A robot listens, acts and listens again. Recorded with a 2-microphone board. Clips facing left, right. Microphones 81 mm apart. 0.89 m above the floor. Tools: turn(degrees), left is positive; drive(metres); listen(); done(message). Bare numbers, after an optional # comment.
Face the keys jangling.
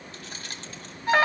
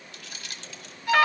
# The keys jangling: about 40° left or 140° left.
turn(40)
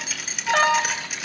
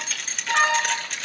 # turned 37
done("Found it: keys jangling, straight ahead, 2 to 4 m away.")